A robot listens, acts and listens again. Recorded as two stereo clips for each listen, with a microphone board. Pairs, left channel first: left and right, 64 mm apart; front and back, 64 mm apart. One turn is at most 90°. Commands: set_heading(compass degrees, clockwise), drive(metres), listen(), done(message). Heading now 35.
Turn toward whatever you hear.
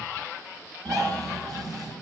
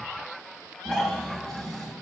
set_heading(115)
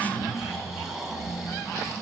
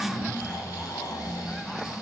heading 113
done("Found it: snoring, straight ahead, 1 to 2 m away.")